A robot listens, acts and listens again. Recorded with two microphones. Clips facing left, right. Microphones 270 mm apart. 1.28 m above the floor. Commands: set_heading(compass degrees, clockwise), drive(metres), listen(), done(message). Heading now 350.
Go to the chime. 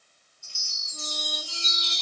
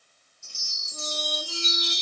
set_heading(45)
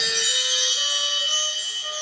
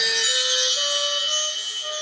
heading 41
drive(1.0)
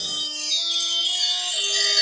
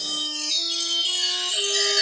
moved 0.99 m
drive(1.0)
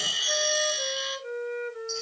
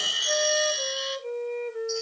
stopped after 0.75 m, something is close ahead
done("I am next to the chime.")